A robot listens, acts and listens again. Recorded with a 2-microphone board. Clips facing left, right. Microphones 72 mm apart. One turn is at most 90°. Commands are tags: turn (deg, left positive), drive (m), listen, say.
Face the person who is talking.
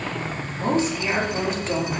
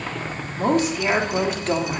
<turn deg="-65"/>
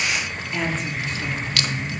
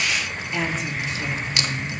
<say>Found it: a woman speaking, straight ahead, 2 to 4 m away.</say>